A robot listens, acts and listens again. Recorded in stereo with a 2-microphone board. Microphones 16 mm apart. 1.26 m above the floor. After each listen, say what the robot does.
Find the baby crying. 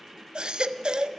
Turn 70° right.
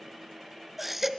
Turn 10° right.
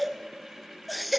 Facing the baby crying.